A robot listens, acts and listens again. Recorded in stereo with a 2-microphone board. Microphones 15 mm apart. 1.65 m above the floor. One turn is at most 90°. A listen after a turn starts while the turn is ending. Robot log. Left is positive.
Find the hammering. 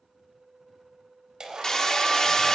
note: The hammering: about 50° left or 130° left.
cmd yaw +50
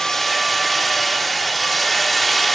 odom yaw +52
note: So it is at 10° left.
cmd yaw +10
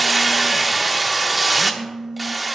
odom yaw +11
end: Facing the hammering, 1 to 2 m away.